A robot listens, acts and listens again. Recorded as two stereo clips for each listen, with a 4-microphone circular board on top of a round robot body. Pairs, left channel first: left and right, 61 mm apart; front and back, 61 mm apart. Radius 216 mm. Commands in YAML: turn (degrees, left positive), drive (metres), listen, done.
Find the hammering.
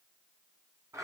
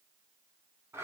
listen: true
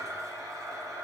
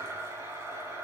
listen: true
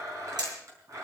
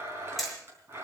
turn: -85
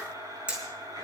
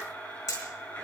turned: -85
turn: -15
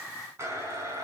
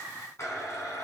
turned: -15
listen: true
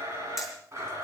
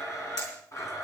listen: true
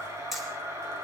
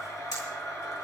done: "I heard hammering from this way, but can't make it out now."